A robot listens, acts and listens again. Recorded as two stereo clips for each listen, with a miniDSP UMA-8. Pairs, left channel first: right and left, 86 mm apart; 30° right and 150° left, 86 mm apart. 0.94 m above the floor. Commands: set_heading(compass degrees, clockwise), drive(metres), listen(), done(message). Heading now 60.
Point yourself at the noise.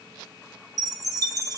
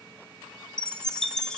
set_heading(10)
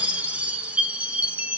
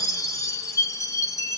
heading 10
set_heading(355)
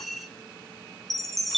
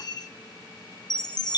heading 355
done("Facing the chime.")